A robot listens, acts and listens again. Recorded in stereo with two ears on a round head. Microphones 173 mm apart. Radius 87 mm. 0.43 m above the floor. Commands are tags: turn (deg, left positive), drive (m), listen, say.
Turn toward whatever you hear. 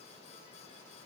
<listen/>
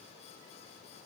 <listen/>
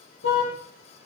<turn deg="70"/>
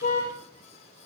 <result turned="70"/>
<turn deg="40"/>
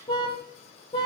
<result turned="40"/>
<turn deg="25"/>
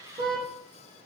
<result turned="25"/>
<turn deg="-25"/>
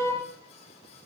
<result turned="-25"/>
<turn deg="15"/>
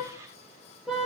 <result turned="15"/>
<say>Found it: a car horn, straight ahead, over 4 m away.</say>